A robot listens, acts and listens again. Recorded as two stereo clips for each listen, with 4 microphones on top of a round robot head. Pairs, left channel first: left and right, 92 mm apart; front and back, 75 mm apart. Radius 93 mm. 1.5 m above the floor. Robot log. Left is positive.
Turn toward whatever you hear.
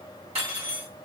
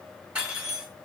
note: The cutlery clinking: 100° right.
cmd yaw -100
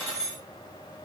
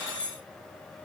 note: The cutlery clinking is now 20° left.
cmd yaw +20
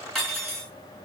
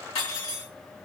end: Found it: cutlery clinking, straight ahead.